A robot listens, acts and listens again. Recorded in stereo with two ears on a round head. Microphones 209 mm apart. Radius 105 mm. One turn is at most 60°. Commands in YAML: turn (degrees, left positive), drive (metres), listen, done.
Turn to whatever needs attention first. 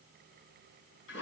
listen: true
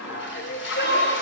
turn: 50
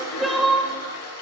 done: "Facing the crying."